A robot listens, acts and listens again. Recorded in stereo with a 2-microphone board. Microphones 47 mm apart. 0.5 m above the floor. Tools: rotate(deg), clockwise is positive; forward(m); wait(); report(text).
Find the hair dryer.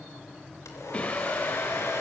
rotate(-90)
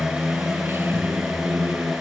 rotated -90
wait()
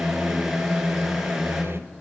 wait()
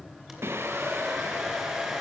rotate(10)
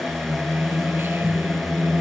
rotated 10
wait()
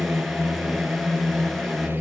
wait()
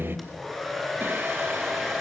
report("Facing the hair dryer.")